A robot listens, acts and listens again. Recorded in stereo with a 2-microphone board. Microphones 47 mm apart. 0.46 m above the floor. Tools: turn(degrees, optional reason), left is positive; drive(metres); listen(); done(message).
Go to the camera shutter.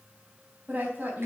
listen()
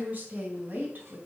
listen()
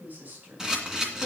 turn(degrees=-30)
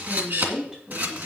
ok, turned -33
turn(degrees=-135, reason="So it is at 135° right.")
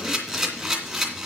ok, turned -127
turn(degrees=-10, reason="The camera shutter is now 10° right.")
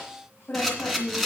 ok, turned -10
drive(metres=1.0)
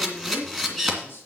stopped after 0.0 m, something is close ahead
done("Something is in my way. I am facing the camera shutter but have not reached it.")